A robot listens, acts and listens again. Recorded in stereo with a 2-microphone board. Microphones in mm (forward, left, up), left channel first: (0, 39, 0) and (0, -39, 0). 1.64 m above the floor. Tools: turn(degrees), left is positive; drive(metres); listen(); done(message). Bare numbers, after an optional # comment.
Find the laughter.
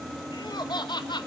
# The laughter: about 70° left or 110° left.
turn(70)
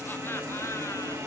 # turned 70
listen()
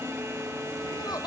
listen()
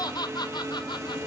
# So it is at 65° left.
turn(65)
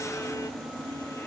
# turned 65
listen()
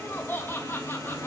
# The laughter is now 25° left.
turn(25)
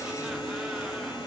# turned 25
listen()
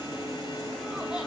listen()
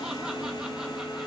done("I heard laughter from this way, but can't make it out now.")